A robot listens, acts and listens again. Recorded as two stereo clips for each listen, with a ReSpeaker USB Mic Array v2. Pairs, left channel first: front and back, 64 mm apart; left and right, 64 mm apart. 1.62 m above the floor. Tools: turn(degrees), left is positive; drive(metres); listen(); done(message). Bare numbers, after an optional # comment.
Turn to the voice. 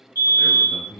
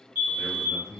# The man speaking: 55° left.
turn(55)
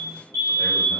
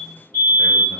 listen()
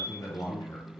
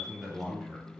done("Facing the man speaking, 1 to 2 m away.")